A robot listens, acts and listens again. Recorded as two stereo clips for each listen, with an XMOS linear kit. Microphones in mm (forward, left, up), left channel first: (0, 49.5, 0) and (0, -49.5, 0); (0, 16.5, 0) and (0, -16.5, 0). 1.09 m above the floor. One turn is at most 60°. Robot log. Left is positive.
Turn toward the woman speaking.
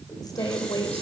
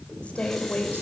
note: The woman speaking: about 40° left or 140° left.
cmd yaw +40
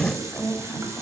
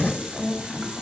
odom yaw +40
end: Found it: a woman speaking, straight ahead, over 4 m away.